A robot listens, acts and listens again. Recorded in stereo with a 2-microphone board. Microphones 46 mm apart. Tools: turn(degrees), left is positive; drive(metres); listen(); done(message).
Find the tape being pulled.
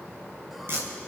turn(degrees=-60)
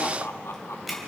done("Found it: tape being pulled, straight ahead.")